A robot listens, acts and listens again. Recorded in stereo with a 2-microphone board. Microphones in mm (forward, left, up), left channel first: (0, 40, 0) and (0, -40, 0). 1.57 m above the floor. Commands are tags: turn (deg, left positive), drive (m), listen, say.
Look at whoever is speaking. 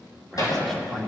<turn deg="30"/>
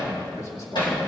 <turn deg="135"/>
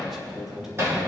<say>Found it: a man speaking, straight ahead, 2 to 4 m away.</say>